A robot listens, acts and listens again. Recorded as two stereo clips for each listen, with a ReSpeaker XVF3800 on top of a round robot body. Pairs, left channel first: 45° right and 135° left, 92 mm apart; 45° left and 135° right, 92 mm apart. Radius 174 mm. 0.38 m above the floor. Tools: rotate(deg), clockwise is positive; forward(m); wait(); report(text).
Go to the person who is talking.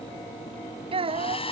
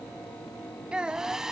rotate(-145)
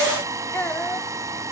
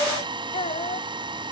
rotate(-25)
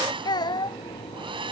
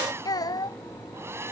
forward(1.0)
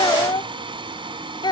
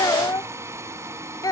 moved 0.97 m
forward(1.0)
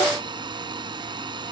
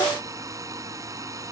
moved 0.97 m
wait()
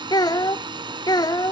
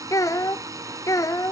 forward(1.0)
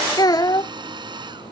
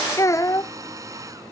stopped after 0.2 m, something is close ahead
report("Arrived at the child speaking, straight ahead.")